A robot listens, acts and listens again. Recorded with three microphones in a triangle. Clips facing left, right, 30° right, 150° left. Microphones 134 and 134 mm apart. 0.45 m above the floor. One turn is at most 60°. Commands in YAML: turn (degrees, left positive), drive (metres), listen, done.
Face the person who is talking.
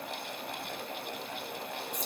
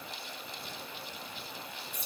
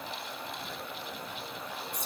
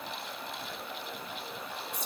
listen: true
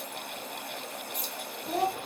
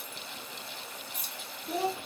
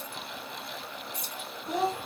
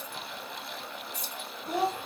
turn: 60
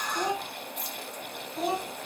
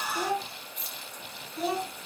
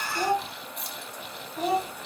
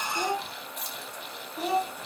turn: 25
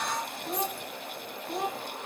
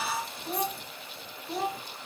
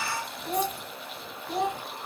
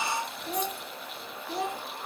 done: "Facing the child speaking."